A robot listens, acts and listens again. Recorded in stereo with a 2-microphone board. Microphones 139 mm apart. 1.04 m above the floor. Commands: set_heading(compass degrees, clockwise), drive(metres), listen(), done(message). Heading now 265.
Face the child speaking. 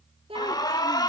set_heading(305)
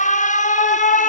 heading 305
listen()
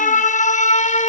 listen()
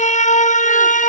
done("I heard a child speaking, but can't make it out now. It was about straight ahead or 100° right.")